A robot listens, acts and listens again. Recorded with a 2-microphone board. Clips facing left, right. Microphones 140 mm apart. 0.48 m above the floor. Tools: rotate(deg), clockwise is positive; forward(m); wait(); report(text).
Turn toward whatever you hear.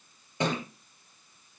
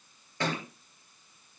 rotate(-20)
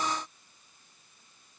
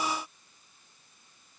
wait()
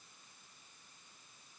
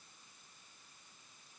report("I heard a thud, but can't make it out now. It was about straight ahead or 140° left.")